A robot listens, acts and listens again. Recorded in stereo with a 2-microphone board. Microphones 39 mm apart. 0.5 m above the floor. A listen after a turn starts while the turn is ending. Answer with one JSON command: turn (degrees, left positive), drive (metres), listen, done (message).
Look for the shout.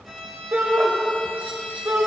{"turn": -65}
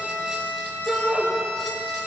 {"turn": -30}
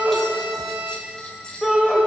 {"done": "Facing the shout, 2 to 4 m away."}